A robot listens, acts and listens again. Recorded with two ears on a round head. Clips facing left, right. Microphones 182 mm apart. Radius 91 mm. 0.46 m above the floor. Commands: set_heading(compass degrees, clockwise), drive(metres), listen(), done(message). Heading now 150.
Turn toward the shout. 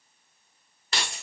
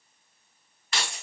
listen()
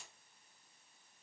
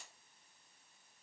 listen()
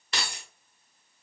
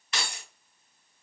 done("I can't make out a shout, only keys jangling.")